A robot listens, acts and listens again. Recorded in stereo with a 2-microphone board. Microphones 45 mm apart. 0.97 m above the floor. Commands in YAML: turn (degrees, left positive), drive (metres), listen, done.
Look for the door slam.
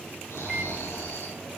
listen: true
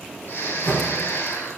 turn: 45
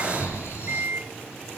listen: true
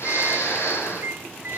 done: "I heard a door slam, but can't make it out now. It was about straight ahead or 90° left."